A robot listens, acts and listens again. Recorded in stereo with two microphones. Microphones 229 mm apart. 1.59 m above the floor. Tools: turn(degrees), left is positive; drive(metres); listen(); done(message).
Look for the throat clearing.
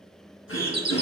turn(degrees=60)
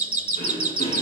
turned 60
turn(degrees=35)
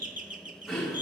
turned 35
done("Facing the throat clearing, 2 to 4 m away.")